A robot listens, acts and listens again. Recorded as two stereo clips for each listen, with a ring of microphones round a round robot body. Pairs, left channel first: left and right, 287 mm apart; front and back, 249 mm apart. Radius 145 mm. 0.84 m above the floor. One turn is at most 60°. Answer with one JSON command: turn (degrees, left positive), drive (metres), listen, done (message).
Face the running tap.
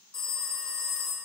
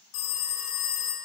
{"listen": true}
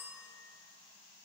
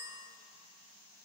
{"listen": true}
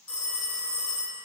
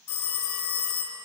{"done": "I can't make out a running tap, only a phone ringing."}